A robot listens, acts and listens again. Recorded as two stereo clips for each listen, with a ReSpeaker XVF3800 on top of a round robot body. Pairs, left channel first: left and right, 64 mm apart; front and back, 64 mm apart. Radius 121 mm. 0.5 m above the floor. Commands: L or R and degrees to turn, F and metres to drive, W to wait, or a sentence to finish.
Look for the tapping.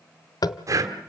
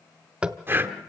L105
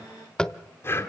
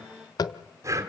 L10
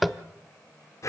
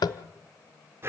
Found it: tapping, straight ahead.